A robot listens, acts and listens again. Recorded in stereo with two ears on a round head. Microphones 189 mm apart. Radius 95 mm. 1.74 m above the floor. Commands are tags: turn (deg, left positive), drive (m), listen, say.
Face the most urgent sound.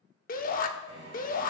<turn deg="45"/>
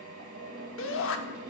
<turn deg="85"/>
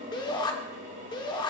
<turn deg="25"/>
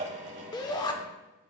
<turn deg="20"/>
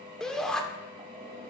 <say>Found it: a shout, straight ahead.</say>